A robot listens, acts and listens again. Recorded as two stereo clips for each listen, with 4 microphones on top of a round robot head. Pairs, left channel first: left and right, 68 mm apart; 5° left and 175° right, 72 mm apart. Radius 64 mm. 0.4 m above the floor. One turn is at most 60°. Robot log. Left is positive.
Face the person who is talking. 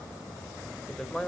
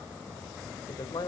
end: Found it: a man speaking, straight ahead.